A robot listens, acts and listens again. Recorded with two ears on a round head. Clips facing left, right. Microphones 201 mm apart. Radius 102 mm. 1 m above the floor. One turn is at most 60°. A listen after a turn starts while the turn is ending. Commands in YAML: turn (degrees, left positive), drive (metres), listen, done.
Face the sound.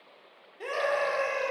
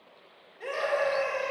turn: 55
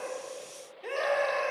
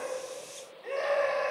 turn: 60
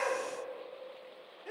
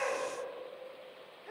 turn: 45
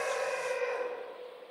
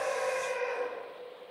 done: "Facing the scream."